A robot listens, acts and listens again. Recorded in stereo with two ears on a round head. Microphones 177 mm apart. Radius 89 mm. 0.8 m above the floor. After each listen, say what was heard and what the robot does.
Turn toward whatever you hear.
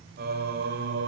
The singing: about 65° right or 115° right. Turn 65° right.
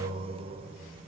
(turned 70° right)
So it is at 25° right. Turn 25° right.
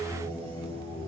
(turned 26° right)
The singing is now 20° left. Turn 20° left.
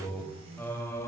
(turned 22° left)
The singing is now 15° left. Turn 15° left.
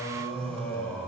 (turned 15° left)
Found it: singing, straight ahead.